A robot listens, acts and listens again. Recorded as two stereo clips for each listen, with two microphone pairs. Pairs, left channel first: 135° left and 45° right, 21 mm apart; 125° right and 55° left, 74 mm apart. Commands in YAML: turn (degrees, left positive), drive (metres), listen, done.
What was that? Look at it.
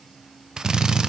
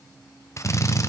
turn: -90
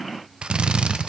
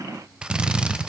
turn: -20
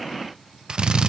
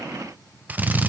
done: "Found it: a drill, straight ahead, 1 to 2 m away."